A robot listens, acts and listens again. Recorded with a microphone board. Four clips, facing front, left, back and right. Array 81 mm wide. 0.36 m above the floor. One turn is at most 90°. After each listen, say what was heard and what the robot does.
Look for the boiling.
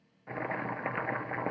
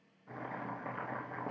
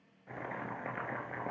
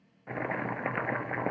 The boiling: 65° right. Turn 65° right.
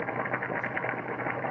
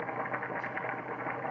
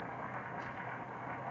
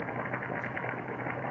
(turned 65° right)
Found it: boiling, straight ahead.